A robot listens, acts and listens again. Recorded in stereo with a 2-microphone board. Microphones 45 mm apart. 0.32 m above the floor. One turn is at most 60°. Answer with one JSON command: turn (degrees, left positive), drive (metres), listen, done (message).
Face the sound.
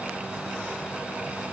{"listen": true}
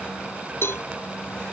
{"turn": 60}
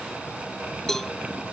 {"turn": 10}
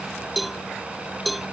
{"done": "Facing the cowbell."}